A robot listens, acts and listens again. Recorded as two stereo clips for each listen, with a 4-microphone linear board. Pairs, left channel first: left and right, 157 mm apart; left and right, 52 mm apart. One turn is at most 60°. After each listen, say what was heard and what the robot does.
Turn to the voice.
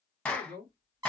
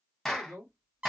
Turn 60° right.
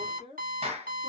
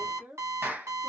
So it is at 40° right. Turn 40° right.
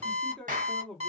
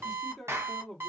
Found it: a man speaking, straight ahead.